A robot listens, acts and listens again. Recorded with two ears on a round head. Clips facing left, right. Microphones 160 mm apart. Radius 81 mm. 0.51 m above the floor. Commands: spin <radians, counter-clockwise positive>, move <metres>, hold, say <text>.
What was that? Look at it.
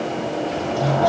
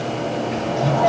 spin 0.61
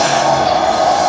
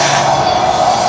say Found it: a sliding door, straight ahead.